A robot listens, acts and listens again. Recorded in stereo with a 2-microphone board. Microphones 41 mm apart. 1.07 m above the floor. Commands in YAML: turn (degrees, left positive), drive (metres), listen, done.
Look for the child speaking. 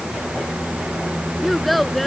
turn: 30
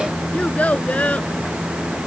turn: 145
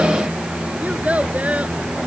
turn: -35
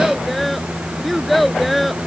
done: "Found it: a child speaking, straight ahead."